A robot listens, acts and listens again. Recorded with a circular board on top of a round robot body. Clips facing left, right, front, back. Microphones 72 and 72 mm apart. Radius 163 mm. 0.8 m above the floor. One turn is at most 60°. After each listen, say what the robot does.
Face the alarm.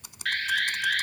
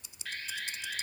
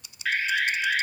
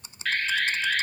Turn 60° left.
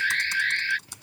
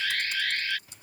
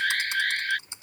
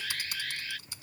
Turn 35° left.
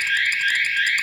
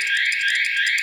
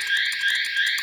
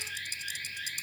Facing the alarm.